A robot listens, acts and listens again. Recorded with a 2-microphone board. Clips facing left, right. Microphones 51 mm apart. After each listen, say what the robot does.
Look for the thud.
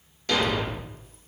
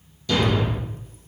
Turn 55° left.
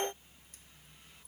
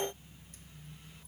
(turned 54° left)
Keep listening.
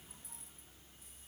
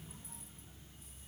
I heard a thud, but can't make it out now. It was about straight ahead or 70° left.